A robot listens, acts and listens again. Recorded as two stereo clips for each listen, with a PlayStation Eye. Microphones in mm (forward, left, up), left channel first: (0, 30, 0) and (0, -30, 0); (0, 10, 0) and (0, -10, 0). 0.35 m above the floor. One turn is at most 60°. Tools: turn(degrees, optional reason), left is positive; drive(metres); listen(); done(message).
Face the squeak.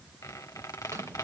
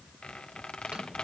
turn(degrees=60, reason="The squeak: about 75° left or 105° left.")
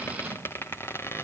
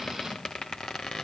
turn(degrees=45, reason="So it is at 45° left.")
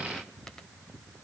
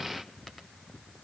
listen()
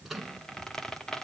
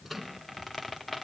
turn(degrees=10, reason="The squeak is now 10° left.")
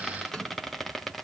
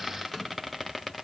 done("Found it: a squeak, straight ahead, 1 to 2 m away.")